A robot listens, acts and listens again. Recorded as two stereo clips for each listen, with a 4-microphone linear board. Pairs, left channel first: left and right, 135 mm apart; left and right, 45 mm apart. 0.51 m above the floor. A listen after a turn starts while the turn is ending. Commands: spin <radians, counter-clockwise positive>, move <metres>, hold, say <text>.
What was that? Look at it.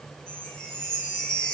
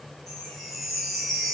spin 0.52
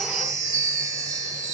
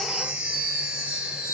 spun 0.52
spin -0.44
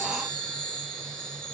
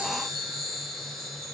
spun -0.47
say Found it: a chime, straight ahead, 1 to 2 m away.